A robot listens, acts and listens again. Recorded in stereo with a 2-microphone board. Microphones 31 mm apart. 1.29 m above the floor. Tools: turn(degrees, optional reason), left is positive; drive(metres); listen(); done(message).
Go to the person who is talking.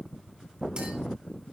listen()
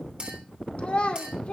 turn(degrees=40, reason="The child speaking: about 40° left or 140° left.")
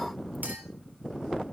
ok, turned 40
listen()
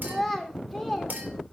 drive(metres=1.0)
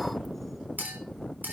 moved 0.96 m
listen()
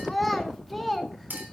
drive(metres=1.0)
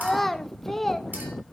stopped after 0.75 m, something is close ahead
turn(degrees=10, reason="The child speaking is now 10° left.")
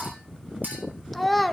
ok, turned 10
done("I am next to the child speaking.")